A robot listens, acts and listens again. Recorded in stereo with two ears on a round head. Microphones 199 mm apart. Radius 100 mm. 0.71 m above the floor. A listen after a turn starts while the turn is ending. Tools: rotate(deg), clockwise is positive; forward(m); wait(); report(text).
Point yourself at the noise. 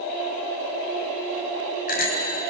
rotate(-40)
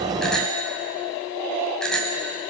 report("Found it: a bicycle bell, straight ahead.")